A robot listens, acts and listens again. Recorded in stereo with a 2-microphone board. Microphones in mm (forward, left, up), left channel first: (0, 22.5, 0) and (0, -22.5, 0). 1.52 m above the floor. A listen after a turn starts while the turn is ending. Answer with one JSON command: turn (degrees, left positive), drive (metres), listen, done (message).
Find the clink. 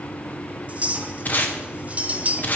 {"turn": -30}
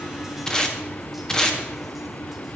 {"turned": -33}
{"listen": true}
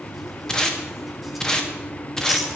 {"listen": true}
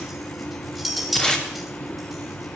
{"done": "Facing the clink."}